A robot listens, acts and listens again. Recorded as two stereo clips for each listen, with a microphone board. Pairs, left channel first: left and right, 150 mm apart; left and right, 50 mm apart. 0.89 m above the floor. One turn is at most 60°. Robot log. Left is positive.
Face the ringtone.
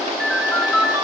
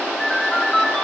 cmd yaw -30
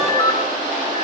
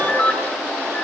note: So it is at 25° left.
cmd yaw +25
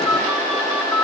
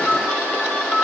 note: The ringtone is now 10° left.
cmd yaw +10
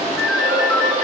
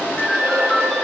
end: Facing the ringtone.